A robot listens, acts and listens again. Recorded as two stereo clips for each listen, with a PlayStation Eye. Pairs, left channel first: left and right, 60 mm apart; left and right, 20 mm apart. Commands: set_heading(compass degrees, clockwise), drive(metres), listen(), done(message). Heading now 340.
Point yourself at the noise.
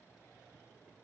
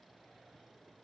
listen()
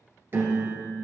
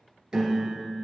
set_heading(20)
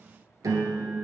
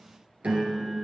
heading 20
set_heading(120)
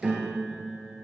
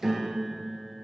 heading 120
done("Found it: a piano, straight ahead.")